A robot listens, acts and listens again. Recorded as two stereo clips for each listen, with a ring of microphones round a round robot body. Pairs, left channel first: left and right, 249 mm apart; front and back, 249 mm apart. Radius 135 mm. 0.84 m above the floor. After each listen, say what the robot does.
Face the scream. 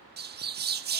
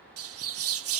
Keep listening.
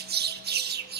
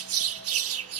Keep listening.
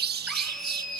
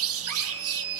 Turn 180° left.
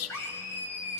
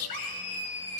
Turn 10° left.
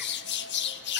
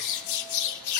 Keep listening.
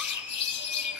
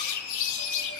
Facing the scream, over 4 m away.